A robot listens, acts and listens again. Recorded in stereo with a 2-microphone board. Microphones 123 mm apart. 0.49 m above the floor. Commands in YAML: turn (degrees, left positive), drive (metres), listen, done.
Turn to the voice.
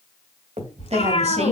turn: -60
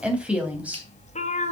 turn: -10
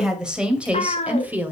turn: -15
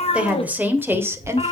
turn: -25
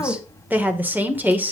turn: -15
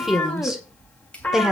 done: "Found it: a woman speaking, straight ahead."